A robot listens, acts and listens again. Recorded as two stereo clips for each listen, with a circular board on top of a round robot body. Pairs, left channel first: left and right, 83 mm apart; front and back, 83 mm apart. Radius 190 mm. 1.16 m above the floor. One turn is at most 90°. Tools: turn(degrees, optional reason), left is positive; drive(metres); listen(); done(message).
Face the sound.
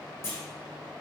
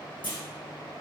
turn(degrees=30, reason="The clunk: 30° left.")
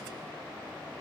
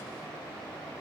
done("Facing where the clunk came from. I can't hear it now.")